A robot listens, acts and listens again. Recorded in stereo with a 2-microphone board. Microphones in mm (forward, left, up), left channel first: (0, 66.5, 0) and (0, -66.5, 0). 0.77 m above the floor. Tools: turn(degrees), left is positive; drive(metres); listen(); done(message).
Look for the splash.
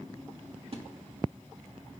turn(degrees=-45)
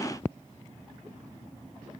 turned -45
listen()
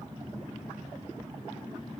done("I heard a splash, but can't make it out now. It was about straight ahead or 90° right.")